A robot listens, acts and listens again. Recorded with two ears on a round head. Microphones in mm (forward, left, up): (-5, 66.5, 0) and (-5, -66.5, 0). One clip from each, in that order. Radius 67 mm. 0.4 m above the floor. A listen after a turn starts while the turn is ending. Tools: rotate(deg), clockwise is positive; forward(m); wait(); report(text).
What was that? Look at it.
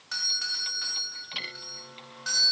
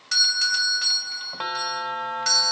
rotate(55)
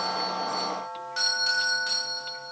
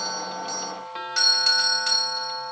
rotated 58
rotate(50)
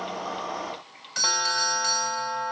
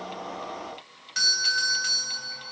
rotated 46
report("Facing the doorbell.")